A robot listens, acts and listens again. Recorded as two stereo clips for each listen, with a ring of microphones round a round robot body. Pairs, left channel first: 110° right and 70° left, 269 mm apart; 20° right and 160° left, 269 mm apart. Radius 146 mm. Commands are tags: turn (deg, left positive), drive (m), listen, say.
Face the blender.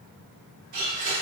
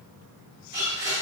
<turn deg="80"/>
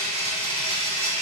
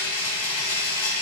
<say>Found it: a blender, straight ahead, 1 to 2 m away.</say>